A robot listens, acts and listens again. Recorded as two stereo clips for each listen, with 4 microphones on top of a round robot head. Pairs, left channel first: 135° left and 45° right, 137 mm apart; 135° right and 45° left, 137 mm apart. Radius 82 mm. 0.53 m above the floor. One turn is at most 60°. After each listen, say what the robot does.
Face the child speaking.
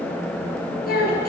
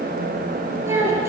Turn 60° left.
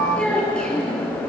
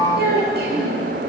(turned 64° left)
Turn 50° left.
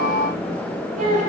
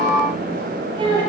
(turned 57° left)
Turn 10° right.
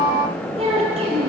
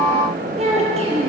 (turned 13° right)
Facing the child speaking.